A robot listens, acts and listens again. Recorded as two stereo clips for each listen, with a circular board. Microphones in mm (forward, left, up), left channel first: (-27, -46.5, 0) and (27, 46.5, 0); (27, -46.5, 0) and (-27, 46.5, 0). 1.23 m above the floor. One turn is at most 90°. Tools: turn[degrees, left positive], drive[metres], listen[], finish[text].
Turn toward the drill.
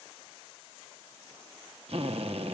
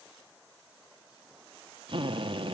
Thought: The drill: 80° left.
Action: turn[80]
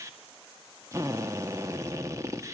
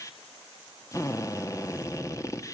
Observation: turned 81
Action: finish[Facing the drill, 1 to 2 m away.]